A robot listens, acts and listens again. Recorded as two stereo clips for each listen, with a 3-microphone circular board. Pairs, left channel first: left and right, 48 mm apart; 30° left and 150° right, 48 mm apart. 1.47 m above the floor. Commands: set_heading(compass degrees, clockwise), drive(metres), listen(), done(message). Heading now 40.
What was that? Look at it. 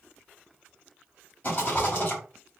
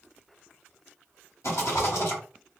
set_heading(355)
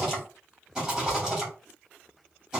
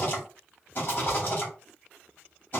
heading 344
set_heading(359)
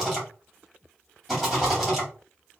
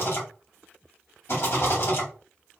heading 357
done("Found it: a rattle, straight ahead.")